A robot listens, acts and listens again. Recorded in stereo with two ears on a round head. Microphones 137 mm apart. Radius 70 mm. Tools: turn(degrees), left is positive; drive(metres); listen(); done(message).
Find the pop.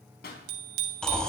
turn(degrees=75)
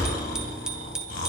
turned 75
listen()
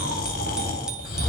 done("I heard a pop, but can't make it out now. It was about straight ahead or 30° left.")